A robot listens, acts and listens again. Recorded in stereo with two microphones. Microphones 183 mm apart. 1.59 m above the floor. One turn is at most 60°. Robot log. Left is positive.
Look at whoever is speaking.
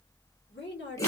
cmd yaw +60
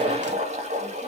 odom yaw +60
note: Nothing new. It was at 30° left.
cmd yaw +30
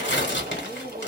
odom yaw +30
cmd idle
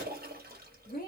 note: The woman speaking is now 50° left.
cmd yaw +50
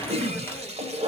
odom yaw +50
cmd idle
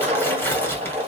cmd idle
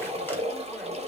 end: Facing where the woman speaking came from. I can't hear it now.